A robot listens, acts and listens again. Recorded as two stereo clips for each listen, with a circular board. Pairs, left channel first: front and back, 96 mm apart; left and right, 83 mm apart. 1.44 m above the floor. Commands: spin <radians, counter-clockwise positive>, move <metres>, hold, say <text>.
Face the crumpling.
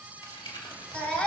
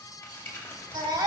spin 0.44
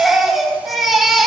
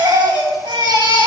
hold
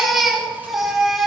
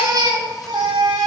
hold
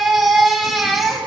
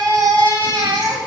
say I heard crumpling from this way, but can't make it out now.